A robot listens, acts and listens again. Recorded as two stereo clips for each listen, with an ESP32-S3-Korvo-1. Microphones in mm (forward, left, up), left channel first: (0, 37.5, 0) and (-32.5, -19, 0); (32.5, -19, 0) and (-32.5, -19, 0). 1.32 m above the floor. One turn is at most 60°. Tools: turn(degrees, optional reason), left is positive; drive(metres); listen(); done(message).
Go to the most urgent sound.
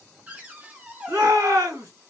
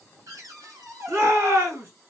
turn(degrees=-60, reason="The shout: 140° right.")
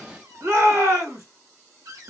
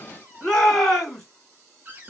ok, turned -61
turn(degrees=-60, reason="The shout is now 80° right.")
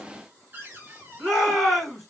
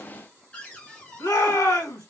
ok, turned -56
turn(degrees=-25, reason="The shout is now 25° right.")
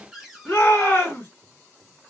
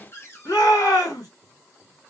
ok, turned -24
drive(metres=1.0)
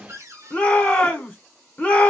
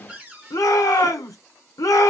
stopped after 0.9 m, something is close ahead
done("Arrived at the shout, straight ahead.")